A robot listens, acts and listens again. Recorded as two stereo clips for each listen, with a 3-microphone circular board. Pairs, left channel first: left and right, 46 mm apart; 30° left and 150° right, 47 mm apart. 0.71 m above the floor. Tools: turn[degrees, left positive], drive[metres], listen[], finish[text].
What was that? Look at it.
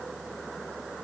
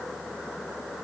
Action: listen[]
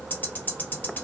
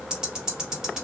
Thought: The ticking: 135° left.
Action: turn[135]
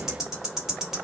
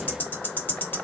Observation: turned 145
Thought: The ticking is now 10° right.
Action: turn[-10]
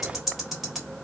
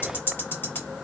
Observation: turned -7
Action: finish[Found it: ticking, straight ahead, 1 to 2 m away.]